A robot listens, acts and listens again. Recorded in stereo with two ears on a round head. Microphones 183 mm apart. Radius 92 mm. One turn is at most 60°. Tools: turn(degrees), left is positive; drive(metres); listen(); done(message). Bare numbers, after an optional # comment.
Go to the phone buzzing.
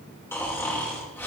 listen()
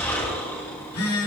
turn(60)
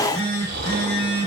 # So it is at 25° left.
turn(25)
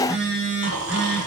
drive(1.0)
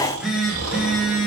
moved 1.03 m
drive(1.0)
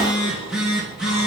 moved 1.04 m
drive(1.0)
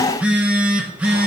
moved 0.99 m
drive(1.0)
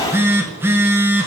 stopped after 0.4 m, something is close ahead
# The phone buzzing is now 10° right.
turn(-10)
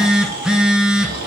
done("I am next to the phone buzzing.")